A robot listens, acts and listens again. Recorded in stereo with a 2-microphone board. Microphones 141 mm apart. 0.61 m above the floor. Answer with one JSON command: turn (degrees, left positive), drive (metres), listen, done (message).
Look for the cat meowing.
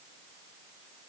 {"listen": true}
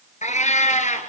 {"turn": 60}
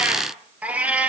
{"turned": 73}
{"turn": -10}
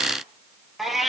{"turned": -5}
{"done": "Facing the cat meowing, over 4 m away."}